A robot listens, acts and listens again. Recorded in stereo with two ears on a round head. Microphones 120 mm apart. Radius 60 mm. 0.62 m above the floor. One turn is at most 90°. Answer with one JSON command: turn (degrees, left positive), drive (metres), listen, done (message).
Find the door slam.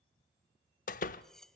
{"turn": 65}
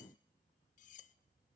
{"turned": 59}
{"listen": true}
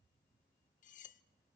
{"done": "I heard a door slam, but can't make it out now. It was about 5° left or 55° left."}